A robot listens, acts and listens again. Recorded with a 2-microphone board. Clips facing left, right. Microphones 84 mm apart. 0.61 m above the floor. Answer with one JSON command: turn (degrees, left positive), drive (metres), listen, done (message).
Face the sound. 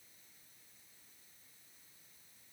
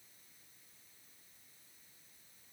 {"listen": true}
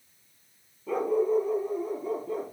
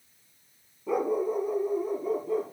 {"turn": 30}
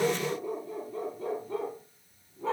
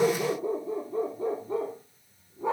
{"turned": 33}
{"turn": -15}
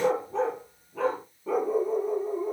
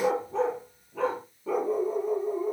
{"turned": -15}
{"done": "Found it: a dog barking, straight ahead."}